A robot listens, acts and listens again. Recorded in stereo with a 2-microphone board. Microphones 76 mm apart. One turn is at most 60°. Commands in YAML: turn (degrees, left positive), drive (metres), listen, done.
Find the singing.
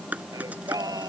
turn: -55
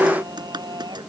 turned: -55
turn: -60
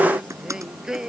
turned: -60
turn: -10
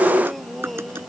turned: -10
done: "Found it: singing, straight ahead."